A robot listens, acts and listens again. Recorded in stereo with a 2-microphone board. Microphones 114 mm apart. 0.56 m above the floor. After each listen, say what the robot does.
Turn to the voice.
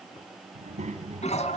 Turn 75° right.
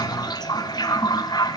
Keep listening.
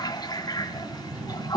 Turn 15° right.
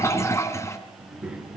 Turn 10° right.
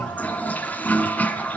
Keep listening.
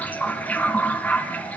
Keep listening.
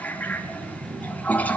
Facing the child speaking.